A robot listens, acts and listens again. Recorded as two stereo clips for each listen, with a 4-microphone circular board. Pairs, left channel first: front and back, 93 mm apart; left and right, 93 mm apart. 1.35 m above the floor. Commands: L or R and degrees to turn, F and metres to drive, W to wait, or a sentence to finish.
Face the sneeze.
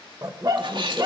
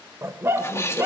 L150
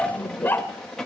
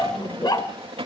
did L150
Facing where the sneeze came from. I can't hear it now.